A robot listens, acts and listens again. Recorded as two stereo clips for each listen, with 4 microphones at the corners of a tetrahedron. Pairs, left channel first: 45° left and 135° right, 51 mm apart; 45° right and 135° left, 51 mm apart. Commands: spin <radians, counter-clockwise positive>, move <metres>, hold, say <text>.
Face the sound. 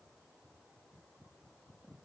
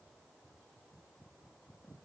hold
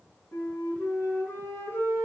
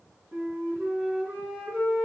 spin 1.40
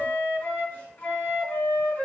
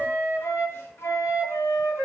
spin -0.17
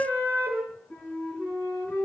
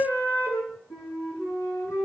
say Found it: a flute, straight ahead.